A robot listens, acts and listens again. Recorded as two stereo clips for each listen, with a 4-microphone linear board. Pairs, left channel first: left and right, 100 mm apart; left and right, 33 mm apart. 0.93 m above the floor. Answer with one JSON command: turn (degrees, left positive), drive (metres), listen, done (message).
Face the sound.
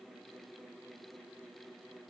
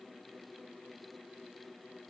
{"listen": true}
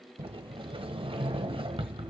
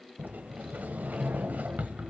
{"turn": -65}
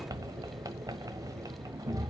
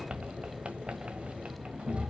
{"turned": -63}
{"turn": -40}
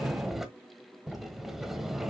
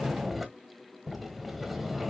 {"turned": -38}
{"done": "Found it: a sliding door, straight ahead, 1 to 2 m away."}